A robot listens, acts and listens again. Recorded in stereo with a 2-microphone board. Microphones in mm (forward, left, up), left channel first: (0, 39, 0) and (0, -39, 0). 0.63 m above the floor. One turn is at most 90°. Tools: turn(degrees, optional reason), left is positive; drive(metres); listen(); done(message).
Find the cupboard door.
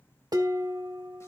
listen()
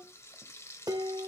listen()
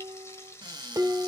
turn(degrees=-70, reason="The cupboard door: about 70° right or 110° right.")
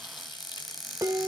done("Facing the cupboard door, 2 to 4 m away.")